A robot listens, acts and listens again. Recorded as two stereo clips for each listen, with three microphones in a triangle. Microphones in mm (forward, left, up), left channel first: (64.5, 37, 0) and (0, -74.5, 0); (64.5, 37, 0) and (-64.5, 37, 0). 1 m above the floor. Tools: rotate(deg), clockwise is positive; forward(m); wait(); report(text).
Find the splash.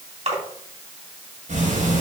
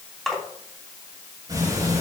rotate(90)
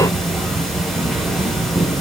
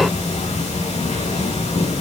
report("Facing where the splash came from. I can't hear it now.")